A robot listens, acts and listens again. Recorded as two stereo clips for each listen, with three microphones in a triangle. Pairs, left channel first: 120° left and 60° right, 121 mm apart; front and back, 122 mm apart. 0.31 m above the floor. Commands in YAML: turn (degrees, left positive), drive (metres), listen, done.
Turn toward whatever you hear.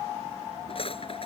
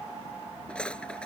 turn: 80
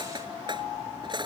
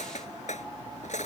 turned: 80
turn: -10
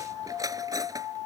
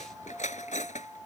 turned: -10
done: "Found it: cutlery clinking, straight ahead."